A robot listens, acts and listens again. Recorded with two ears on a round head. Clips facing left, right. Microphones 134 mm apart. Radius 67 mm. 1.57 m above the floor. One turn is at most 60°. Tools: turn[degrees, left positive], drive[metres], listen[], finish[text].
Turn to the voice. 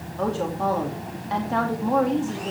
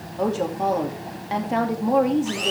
Thought: The woman speaking: about 20° right or 160° right.
Action: turn[-20]
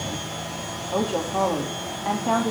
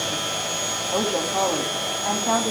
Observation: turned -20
Action: finish[Facing the woman speaking.]